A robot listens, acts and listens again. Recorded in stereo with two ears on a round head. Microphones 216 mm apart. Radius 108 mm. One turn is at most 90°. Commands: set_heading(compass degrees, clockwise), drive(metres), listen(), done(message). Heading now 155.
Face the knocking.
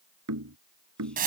set_heading(225)
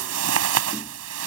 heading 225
listen()
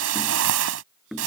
done("Facing the knocking.")